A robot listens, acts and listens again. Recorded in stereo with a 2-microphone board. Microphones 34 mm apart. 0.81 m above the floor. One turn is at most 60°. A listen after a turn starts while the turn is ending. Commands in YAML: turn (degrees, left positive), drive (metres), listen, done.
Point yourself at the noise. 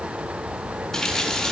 turn: 30
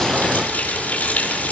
turn: 60
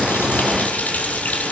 turn: 55
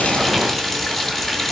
turn: 10
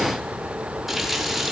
done: "Facing the running tap."